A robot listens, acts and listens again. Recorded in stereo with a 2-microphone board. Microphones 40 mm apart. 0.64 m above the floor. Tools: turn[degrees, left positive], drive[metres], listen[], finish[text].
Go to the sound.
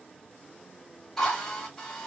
Action: turn[30]
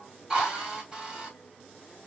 Thought: So it is at 25° right.
Action: turn[-25]
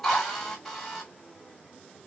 Action: drive[1.0]
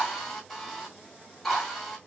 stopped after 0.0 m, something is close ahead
Action: finish[Blocked. The drill is further on, straight ahead.]